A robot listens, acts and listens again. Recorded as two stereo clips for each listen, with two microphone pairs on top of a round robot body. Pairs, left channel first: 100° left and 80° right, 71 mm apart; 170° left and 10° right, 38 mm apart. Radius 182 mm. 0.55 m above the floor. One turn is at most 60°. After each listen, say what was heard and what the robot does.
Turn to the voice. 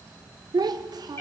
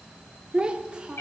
The child speaking: 75° right. Turn 60° right.
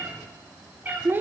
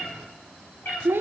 The child speaking is now 20° right. Turn 20° right.
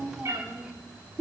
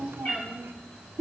Found it: a child speaking, straight ahead, 1 to 2 m away.